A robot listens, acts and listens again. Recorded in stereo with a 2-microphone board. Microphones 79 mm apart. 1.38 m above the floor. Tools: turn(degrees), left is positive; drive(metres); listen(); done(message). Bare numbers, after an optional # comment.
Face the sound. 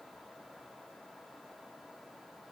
listen()
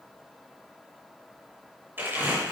# The crumpling: about 25° right or 155° right.
turn(-25)
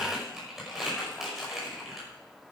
done("Found it: crumpling, straight ahead, over 4 m away.")